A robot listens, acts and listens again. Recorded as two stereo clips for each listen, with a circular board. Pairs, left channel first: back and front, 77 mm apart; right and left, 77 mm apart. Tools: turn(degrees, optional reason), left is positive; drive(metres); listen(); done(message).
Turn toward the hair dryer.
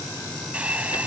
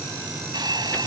turn(degrees=75, reason="The hair dryer: 75° left.")
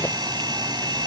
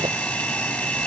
turn(degrees=-15, reason="The hair dryer is now 15° right.")
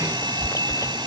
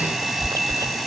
done("Facing the hair dryer.")